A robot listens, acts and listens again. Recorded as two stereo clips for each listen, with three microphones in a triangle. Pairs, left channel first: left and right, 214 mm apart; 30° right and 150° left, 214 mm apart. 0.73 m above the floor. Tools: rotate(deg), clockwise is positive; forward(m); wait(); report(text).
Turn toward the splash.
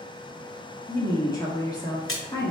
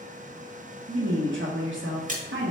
rotate(-100)
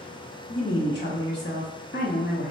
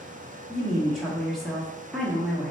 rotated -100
report("Facing where the splash came from. I can't hear it now.")